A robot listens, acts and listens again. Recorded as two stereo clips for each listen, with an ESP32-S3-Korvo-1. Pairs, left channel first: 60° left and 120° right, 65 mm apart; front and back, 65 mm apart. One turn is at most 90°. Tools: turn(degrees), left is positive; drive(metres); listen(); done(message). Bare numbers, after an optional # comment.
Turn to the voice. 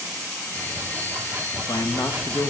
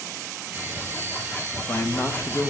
# The man speaking: 60° left.
turn(60)
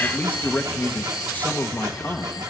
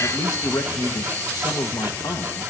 done("Facing the man speaking, 1 to 2 m away.")